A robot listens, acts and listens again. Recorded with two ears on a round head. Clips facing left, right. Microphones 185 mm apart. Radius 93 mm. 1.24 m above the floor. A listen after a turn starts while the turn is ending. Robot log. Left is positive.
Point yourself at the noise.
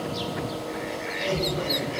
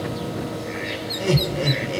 note: The laughter: about 65° right or 115° right.
cmd yaw -65
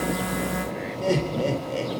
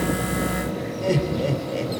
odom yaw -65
end: Facing the laughter.